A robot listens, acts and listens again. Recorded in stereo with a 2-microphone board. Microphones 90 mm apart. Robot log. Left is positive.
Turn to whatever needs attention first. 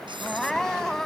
cmd yaw +30
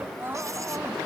note: So it is at 25° right.
cmd yaw -25
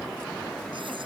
cmd idle
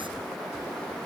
cmd idle
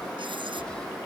end: Facing where the crying came from. I can't hear it now.